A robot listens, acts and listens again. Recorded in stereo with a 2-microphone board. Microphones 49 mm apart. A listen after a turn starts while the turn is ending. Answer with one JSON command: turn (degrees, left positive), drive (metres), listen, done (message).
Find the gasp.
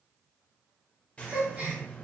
{"turn": -30}
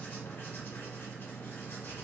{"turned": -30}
{"listen": true}
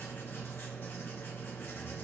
{"done": "I heard a gasp, but can't make it out now. It was about straight ahead or 120° right."}